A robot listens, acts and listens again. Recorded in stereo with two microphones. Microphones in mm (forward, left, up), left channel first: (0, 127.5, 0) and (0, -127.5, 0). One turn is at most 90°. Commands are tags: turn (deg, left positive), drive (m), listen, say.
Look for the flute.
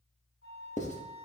<turn deg="55"/>
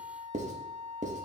<say>Found it: a flute, straight ahead.</say>